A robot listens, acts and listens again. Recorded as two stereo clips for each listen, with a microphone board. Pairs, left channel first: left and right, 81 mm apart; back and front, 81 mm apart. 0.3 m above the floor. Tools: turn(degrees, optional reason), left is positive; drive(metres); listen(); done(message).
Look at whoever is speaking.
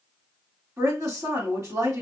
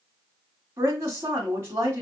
turn(degrees=-50, reason="The woman speaking: 50° right.")
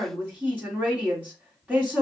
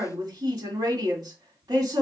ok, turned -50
turn(degrees=-20, reason="The woman speaking is now 20° right.")
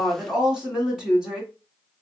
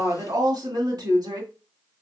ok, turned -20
turn(degrees=-10, reason="The woman speaking is now 10° right.")
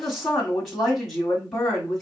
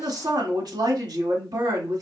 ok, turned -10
done("Found it: a woman speaking, straight ahead.")